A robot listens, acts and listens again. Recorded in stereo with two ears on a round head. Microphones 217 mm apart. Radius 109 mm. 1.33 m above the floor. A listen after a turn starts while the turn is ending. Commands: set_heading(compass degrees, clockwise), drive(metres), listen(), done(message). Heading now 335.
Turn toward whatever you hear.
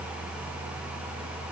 listen()
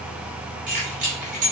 set_heading(5)
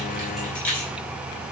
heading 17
done("Facing the keys jangling, 2 to 4 m away.")